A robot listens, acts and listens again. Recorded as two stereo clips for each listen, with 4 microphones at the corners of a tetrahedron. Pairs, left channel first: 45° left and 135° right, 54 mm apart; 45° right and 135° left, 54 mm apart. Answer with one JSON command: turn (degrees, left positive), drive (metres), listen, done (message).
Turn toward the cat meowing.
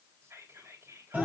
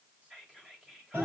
{"listen": true}
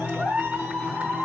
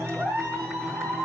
{"listen": true}
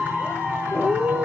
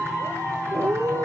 {"turn": 150}
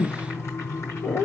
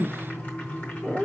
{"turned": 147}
{"turn": 50}
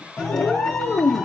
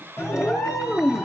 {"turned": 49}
{"turn": 10}
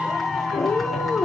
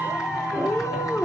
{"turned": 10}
{"done": "Found it: a cat meowing, straight ahead, 1 to 2 m away."}